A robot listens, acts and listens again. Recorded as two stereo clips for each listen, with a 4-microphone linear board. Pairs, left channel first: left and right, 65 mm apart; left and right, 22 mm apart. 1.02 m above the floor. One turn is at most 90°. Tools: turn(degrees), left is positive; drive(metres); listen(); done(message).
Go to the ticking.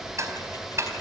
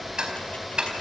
turn(degrees=-45)
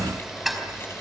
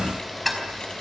drive(metres=1.0)
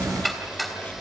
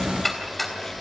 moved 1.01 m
drive(metres=1.0)
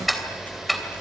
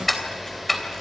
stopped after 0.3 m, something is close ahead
done("Something is in my way. I am facing the ticking but have not reached it.")